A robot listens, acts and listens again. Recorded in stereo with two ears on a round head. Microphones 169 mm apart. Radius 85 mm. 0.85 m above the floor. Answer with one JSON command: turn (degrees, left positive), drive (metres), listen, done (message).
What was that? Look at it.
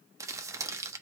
{"turn": -15}
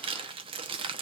{"turn": -150}
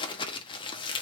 {"turn": 30}
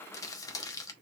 {"turn": 20}
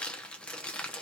{"done": "Facing the crumpling, under 1 m away."}